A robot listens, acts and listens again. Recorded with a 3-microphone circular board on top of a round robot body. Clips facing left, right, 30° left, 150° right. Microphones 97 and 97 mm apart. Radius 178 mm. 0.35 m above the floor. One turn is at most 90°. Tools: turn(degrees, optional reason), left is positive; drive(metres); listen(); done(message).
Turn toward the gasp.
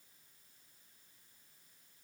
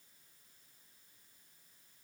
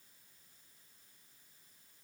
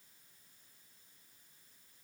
listen()
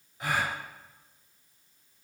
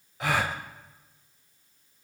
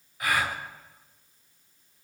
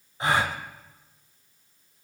turn(degrees=-85, reason="The gasp: 85° right.")
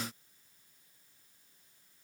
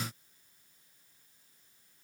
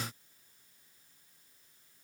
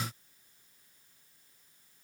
done("Facing where the gasp came from. I can't hear it now.")